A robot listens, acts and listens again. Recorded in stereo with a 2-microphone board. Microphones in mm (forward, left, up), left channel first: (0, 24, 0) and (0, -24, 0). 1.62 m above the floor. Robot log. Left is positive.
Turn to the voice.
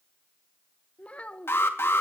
note: The child speaking: about 30° left or 150° left.
cmd yaw +30
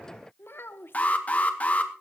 note: So it is at 125° left.
cmd yaw +125
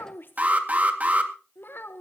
note: The child speaking is now 55° left.
cmd yaw +55
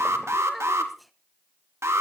end: Found it: a child speaking, straight ahead, 1 to 2 m away.